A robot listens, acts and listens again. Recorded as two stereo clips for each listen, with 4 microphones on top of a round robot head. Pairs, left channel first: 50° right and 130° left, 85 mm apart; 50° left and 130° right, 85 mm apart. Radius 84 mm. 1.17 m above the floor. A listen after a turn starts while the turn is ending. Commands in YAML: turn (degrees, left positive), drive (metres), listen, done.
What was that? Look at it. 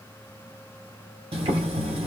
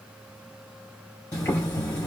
turn: 105
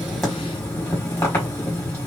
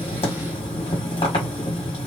turn: 15
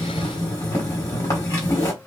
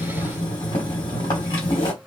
done: "Facing the boiling, 1 to 2 m away."